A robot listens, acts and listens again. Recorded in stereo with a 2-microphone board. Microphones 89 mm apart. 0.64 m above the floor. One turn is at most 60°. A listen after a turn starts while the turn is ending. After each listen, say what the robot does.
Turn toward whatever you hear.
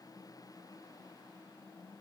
Keep listening.
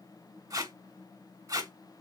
Turn 40° right.
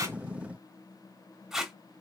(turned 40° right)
Found it: tape being pulled, straight ahead, under 1 m away.